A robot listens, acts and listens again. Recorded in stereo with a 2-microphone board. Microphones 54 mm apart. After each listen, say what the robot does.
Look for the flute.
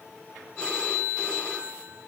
Keep listening.
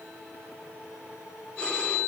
Keep listening.
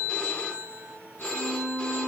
Turn 30° right.
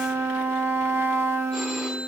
Turn 120° right.
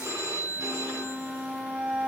Turn 25° right.
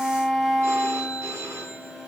Facing the flute.